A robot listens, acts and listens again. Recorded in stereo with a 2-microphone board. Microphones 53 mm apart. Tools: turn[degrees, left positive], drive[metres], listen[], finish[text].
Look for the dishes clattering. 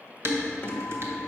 Thought: The dishes clattering: about 50° right or 130° right.
Action: turn[-50]
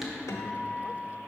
Action: finish[Found it: dishes clattering, straight ahead.]